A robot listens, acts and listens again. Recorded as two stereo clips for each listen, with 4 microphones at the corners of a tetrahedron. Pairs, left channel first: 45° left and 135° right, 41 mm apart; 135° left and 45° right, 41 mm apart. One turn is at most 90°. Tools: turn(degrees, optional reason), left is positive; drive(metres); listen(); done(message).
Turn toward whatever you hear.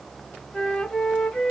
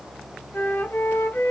turn(degrees=90, reason="The flute: 120° left.")
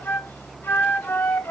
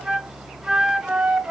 turn(degrees=35, reason="The flute is now 35° left.")
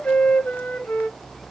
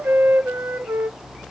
done("Found it: a flute, straight ahead, under 1 m away.")